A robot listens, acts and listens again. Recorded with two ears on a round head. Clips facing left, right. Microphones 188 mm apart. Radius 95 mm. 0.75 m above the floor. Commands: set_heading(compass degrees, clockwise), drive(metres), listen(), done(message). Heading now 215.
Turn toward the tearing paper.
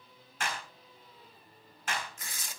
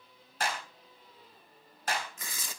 set_heading(280)
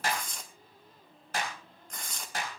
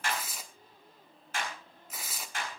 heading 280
done("Found it: tearing paper, straight ahead, 1 to 2 m away.")